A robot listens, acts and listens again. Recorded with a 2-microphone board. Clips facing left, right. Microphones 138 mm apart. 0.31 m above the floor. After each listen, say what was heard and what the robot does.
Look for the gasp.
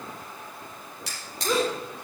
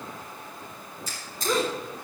Turn 30° left.
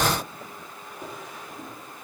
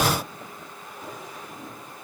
Keep listening.
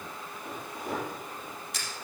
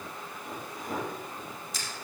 I heard a gasp, but can't make it out now. It was about 30° right or 150° left.